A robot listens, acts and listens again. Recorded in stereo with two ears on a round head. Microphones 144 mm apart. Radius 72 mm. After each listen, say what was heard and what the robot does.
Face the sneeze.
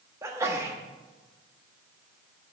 The sneeze: about 20° right or 160° right. Turn 20° right.
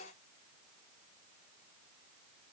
Keep listening.
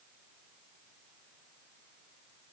I heard a sneeze, but can't make it out now. It was about straight ahead or 140° right.